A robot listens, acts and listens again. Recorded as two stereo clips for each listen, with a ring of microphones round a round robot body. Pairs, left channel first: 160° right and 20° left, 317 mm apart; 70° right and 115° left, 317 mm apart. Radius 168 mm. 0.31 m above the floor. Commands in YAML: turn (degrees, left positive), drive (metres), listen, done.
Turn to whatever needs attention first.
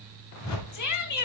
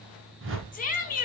turn: -130
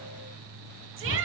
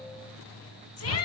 turn: -25
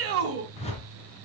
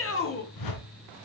turn: -20
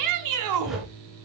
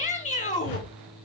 done: "Facing the shout."